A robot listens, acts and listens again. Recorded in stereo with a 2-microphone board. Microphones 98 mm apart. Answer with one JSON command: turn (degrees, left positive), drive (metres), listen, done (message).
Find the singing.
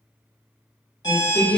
{"turn": 55}
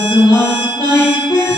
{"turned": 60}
{"turn": 50}
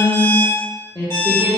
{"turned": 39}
{"turn": 50}
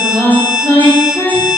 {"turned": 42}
{"turn": 35}
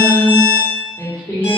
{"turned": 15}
{"turn": 25}
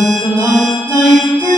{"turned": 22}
{"done": "Found it: singing, straight ahead."}